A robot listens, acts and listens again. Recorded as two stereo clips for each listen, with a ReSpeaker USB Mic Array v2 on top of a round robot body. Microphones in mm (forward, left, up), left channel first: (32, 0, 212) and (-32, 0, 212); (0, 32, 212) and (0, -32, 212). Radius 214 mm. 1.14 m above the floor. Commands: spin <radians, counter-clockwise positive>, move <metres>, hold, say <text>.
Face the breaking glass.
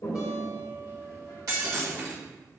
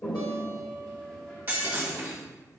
spin -2.62
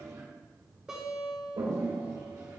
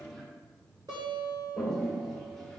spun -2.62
say Facing where the breaking glass came from. I can't hear it now.